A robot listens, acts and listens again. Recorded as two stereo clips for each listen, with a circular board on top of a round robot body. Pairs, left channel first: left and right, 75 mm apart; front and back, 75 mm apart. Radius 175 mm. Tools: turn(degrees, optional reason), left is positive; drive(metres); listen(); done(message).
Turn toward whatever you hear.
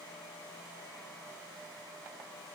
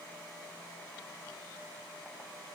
listen()
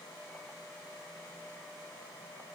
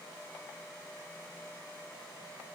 listen()
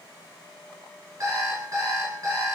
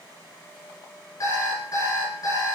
turn(degrees=-40, reason="The alarm clock: 40° right.")
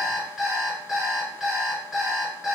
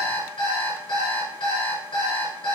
done("Found it: an alarm clock, straight ahead.")